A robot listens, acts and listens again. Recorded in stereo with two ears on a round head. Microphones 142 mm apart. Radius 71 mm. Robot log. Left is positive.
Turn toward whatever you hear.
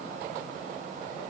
cmd idle
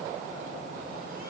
cmd idle
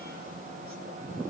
end: I can't make out anything.